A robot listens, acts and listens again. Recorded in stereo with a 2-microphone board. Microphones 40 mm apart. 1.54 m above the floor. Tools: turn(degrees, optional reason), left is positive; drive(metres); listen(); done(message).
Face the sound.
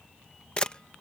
turn(degrees=25, reason="The camera shutter: about 25° left or 155° left.")
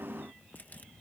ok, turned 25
listen()
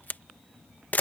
turn(degrees=125, reason="So it is at 125° left.")
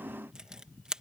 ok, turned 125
turn(degrees=-20, reason="The camera shutter is now 20° right.")
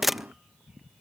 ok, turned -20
done("Found it: a camera shutter, straight ahead.")